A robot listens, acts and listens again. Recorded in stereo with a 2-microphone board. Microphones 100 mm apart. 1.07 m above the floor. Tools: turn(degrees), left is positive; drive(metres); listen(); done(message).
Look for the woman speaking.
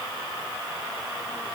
listen()
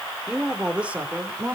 turn(degrees=-15)
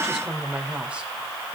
turn(degrees=-30)
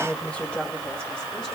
turn(degrees=10)
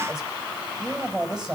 done("Facing the woman speaking.")